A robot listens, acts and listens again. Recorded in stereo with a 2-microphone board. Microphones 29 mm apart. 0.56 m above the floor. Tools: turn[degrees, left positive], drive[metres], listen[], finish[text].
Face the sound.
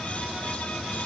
Action: listen[]
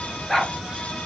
Action: turn[30]
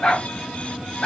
Thought: So it is at 150° left.
Action: turn[150]
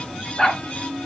Thought: The dog barking is now 20° left.
Action: turn[20]
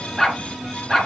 Action: finish[Facing the dog barking.]